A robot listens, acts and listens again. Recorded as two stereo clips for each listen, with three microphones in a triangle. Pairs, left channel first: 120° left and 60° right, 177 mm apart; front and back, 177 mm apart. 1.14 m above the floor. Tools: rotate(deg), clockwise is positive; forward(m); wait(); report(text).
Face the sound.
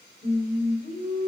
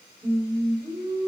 rotate(-105)
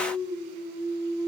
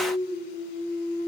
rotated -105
rotate(-30)
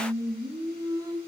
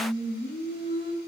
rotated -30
rotate(-10)
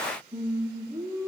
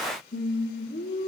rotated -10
rotate(-15)
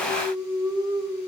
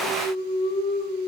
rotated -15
report("Found it: singing, straight ahead.")